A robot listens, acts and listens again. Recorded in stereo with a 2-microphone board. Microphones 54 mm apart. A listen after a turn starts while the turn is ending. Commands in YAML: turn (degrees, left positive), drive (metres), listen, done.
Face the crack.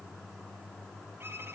listen: true
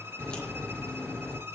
turn: 15
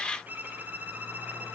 listen: true
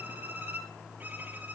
done: "I heard a crack, but can't make it out now. It was about straight ahead or 150° left."